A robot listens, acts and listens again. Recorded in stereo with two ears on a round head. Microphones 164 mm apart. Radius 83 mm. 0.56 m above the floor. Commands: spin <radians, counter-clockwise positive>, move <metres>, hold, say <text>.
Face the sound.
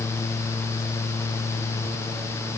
hold
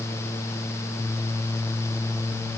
hold
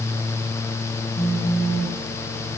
spin 0.61
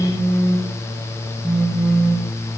say Found it: a phone buzzing, straight ahead.